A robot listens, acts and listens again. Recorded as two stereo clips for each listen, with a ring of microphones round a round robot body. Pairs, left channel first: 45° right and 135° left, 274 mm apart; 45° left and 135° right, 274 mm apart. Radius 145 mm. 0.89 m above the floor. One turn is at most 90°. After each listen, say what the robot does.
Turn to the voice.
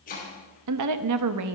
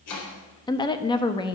Turn 90° left.
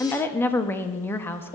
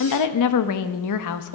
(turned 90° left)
Turn 35° left.
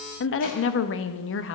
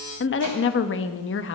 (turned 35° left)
Found it: a woman speaking, straight ahead, 1 to 2 m away.